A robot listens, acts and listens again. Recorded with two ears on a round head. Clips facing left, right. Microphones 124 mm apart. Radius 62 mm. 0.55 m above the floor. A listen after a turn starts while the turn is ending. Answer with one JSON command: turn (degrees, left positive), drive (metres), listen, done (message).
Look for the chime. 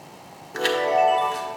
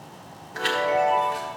{"turn": 60}
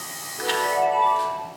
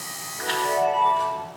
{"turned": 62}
{"turn": 25}
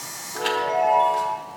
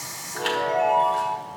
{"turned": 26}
{"done": "Found it: a chime, straight ahead, 1 to 2 m away."}